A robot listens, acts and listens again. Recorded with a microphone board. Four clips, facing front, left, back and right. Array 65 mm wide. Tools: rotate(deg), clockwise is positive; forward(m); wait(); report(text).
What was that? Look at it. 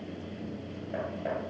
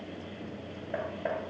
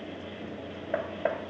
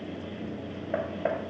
rotate(150)
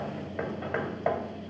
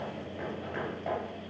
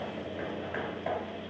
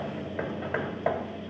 rotate(45)
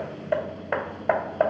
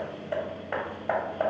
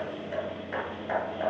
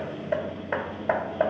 rotate(10)
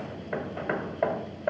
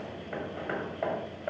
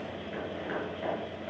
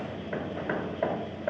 report("Facing the hammering.")